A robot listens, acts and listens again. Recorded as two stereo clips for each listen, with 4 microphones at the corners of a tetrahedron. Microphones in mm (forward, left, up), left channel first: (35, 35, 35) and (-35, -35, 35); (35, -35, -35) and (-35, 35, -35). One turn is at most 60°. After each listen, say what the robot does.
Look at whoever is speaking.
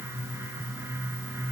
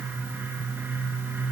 Keep listening.
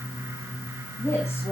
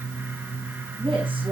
Turn 60° left.
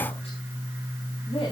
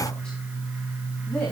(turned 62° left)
Turn 30° left.
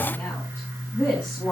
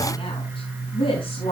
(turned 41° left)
Turn 25° right.
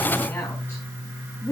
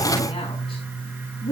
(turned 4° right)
Turn 20° right.
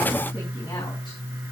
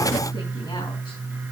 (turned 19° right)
Keep listening.
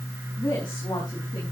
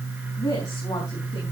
Found it: a woman speaking, straight ahead, over 4 m away.